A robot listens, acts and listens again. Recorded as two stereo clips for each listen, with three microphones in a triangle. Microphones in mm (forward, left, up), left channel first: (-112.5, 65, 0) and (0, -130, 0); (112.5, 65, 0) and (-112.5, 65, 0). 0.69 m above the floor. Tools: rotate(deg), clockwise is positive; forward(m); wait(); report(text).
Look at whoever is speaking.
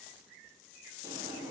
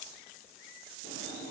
wait()
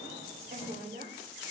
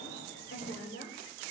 rotate(15)
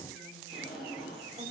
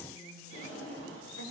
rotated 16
wait()
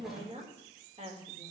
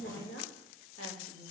report("Found it: a woman speaking, straight ahead, 2 to 4 m away.")